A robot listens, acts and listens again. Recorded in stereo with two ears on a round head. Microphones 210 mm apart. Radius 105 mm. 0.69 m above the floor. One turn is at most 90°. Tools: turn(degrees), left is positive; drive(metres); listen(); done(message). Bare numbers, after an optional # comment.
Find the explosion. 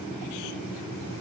listen()
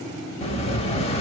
# The explosion: about 25° left or 155° left.
turn(25)
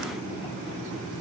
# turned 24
listen()
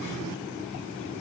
done("I heard an explosion, but can't make it out now. It was about straight ahead or 130° left.")